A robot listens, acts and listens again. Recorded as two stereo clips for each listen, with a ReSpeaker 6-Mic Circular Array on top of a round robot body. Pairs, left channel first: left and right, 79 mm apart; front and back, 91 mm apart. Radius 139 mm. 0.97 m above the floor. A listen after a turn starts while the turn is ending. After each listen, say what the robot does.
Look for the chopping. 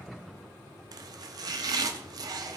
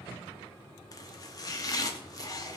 Turn 50° right.
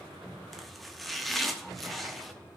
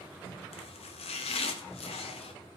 Found it: chopping, straight ahead.